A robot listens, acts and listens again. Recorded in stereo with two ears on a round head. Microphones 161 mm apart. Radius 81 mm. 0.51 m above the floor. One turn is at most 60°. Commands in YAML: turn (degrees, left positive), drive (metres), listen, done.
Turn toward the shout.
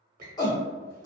turn: 25
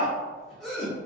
done: "Found it: a shout, straight ahead, 1 to 2 m away."